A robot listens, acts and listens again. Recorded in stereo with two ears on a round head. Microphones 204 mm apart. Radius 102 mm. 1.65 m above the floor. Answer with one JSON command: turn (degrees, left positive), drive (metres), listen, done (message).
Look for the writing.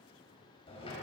{"listen": true}
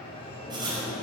{"turn": -20}
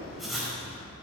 {"done": "Found it: writing, straight ahead."}